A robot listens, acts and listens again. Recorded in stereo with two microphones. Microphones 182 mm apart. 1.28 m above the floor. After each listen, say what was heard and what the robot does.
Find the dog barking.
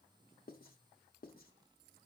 Keep listening.
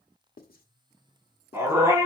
The dog barking: about 15° right or 165° right. Turn 15° right.
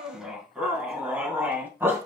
Turn 30° right.
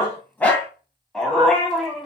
Facing the dog barking, 2 to 4 m away.